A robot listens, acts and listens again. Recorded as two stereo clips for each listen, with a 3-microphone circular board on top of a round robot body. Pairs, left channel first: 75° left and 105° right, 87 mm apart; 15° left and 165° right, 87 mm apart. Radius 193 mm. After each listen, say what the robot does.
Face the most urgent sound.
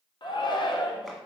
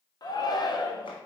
Turn 50° left.
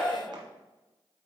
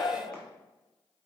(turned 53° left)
Found it: a shout, straight ahead, 1 to 2 m away.